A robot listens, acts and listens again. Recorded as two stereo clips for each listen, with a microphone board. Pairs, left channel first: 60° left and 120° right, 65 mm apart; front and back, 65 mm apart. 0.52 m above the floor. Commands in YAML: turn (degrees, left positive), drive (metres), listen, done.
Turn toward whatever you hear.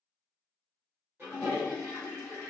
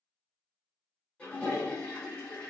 turn: -65
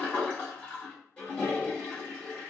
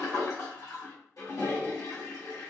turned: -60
done: "Facing the toilet flushing, 1 to 2 m away."